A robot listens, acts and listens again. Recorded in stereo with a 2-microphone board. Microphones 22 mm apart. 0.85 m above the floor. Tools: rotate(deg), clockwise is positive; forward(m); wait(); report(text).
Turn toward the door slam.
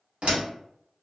rotate(60)
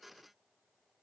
wait()
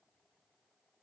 report("I heard a door slam, but can't make it out now. It was about straight ahead or 60° right.")